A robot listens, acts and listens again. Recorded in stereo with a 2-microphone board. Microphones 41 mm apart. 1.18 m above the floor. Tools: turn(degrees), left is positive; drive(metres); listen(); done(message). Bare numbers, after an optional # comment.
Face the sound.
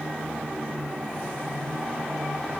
listen()
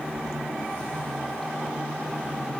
listen()
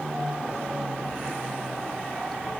done("I can't make out anything.")